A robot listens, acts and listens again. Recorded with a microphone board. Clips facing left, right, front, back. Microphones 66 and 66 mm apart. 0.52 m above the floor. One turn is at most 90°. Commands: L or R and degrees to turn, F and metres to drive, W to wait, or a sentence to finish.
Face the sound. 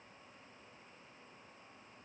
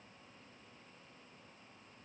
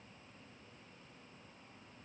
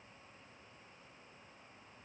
W
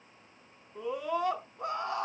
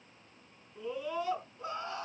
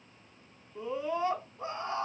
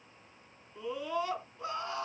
L60
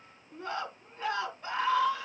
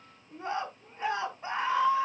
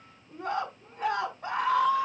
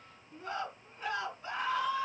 R20
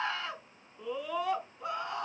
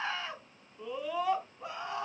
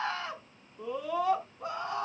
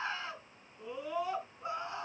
Facing the scream.